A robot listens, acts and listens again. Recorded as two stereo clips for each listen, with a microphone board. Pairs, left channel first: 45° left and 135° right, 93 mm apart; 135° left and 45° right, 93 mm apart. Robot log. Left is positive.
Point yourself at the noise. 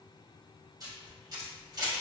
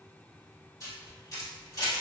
note: The camera shutter: straight behind.
cmd yaw +180
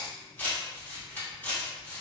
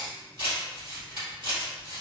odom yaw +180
note: The camera shutter is now 25° right.
cmd yaw -25
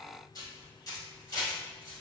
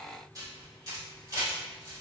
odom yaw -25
end: Facing the camera shutter.